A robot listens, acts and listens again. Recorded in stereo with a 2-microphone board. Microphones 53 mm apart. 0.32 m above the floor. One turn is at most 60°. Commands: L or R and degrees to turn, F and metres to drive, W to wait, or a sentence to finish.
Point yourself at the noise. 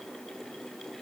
W
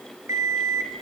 R60
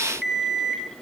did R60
Facing the alarm clock, 1 to 2 m away.